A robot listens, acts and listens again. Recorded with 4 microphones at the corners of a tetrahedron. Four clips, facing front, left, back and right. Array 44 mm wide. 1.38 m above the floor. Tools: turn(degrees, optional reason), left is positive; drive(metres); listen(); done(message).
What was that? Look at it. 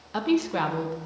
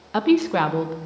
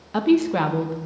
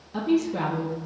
turn(degrees=100, reason="The woman speaking: 100° left.")
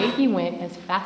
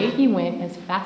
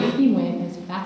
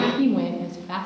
turn(degrees=40, reason="The woman speaking is now 40° left.")
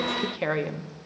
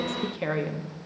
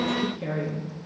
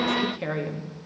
turn(degrees=10, reason="The woman speaking is now 10° left.")
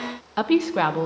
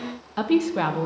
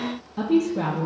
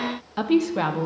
done("Facing the woman speaking.")